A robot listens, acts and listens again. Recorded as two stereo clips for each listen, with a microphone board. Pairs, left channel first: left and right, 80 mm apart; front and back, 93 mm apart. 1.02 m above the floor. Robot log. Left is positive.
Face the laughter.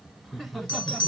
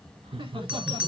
note: The laughter: 175° left.
cmd yaw +175
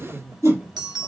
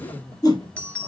note: The laughter is now 35° right.
cmd yaw -35
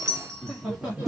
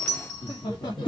note: The laughter is now 15° right.
cmd yaw -15
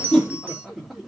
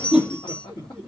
end: Facing the laughter, 2 to 4 m away.